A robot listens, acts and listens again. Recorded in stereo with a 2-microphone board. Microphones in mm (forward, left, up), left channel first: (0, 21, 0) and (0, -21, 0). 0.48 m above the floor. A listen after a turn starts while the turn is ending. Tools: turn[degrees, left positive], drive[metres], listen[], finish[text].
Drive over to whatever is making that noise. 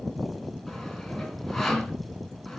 Action: turn[30]
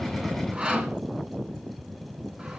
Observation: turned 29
Thought: So it is at 25° right.
Action: turn[-25]
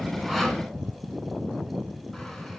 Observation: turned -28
Action: listen[]
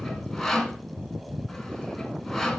Action: drive[1.0]
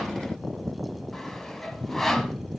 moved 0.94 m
Action: drive[1.0]
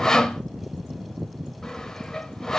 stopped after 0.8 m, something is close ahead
Thought: The sawing is now 15° left.
Action: turn[15]
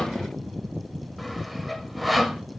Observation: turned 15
Action: finish[I am next to the sawing.]